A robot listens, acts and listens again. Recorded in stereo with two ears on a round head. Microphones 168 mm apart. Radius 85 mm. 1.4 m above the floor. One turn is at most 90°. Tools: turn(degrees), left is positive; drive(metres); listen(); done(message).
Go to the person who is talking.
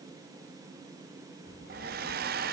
turn(degrees=60)
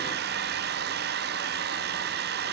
listen()
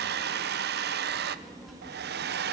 drive(metres=1.0)
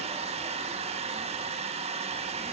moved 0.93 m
listen()
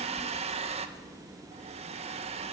drive(metres=1.0)
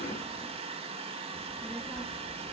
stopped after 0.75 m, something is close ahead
done("Arrived at the child speaking, straight ahead.")